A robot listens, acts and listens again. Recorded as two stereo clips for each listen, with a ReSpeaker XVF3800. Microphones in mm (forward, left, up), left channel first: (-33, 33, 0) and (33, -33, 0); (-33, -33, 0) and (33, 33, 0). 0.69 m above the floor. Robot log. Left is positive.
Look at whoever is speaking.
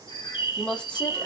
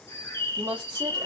note: The woman speaking: 55° left.
cmd yaw +55
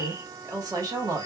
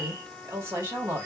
note: The woman speaking is now 10° right.
cmd yaw -10
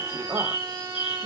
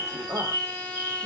end: Facing the woman speaking, 1 to 2 m away.